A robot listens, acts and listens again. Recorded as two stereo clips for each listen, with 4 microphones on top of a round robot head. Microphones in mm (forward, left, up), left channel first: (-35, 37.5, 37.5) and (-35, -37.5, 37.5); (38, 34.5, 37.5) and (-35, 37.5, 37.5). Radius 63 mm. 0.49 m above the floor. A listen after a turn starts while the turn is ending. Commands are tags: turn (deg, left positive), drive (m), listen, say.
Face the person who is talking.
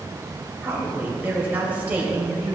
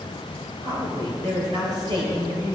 <turn deg="-160"/>
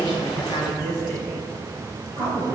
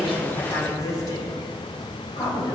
<turn deg="-50"/>
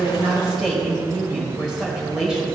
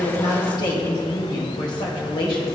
<say>Found it: a woman speaking, straight ahead, 2 to 4 m away.</say>